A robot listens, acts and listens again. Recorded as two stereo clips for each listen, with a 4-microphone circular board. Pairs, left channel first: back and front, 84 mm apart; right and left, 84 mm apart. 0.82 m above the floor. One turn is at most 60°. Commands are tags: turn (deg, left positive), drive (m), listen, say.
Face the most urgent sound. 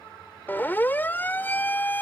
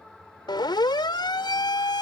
<turn deg="-60"/>
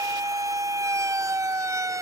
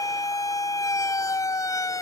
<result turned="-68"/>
<turn deg="-45"/>
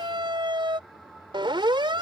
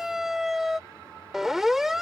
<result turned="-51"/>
<say>Found it: a siren, straight ahead.</say>